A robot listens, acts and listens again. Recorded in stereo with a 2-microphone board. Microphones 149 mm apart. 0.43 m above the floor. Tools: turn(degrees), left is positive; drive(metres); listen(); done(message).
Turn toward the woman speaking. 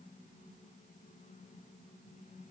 listen()
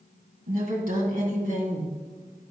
turn(degrees=-70)
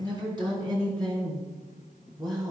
turn(degrees=-25)
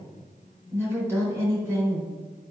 turn(degrees=-15)
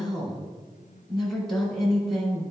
done("Facing the woman speaking, 2 to 4 m away.")